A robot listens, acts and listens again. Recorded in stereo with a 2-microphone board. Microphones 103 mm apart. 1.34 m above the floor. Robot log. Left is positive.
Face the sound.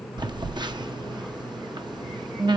note: The phone buzzing: about 45° right or 135° right.
cmd yaw -45
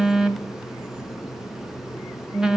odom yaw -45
end: Found it: a phone buzzing, straight ahead.